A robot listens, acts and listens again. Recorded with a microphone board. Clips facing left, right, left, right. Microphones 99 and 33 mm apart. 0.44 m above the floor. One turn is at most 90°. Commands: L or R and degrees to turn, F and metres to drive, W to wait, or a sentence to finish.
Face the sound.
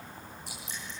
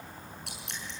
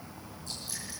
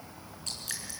R70
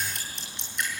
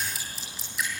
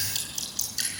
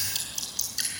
Facing the dripping, over 4 m away.